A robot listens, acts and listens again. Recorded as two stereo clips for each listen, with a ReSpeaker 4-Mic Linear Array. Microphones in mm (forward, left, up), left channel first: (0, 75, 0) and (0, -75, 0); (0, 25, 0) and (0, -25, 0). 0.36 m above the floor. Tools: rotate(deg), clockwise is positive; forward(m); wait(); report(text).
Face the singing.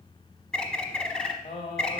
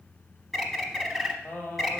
rotate(-40)
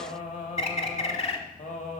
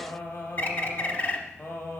rotate(-95)
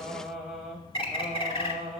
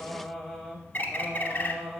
report("Found it: singing, straight ahead, 1 to 2 m away.")